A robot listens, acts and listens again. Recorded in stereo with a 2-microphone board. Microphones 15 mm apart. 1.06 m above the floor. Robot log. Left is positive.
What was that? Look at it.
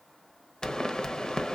note: The pop: about 50° left or 130° left.
cmd yaw +50
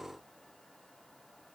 cmd idle
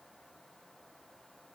end: I heard a pop, but can't make it out now. It was about straight ahead or 80° left.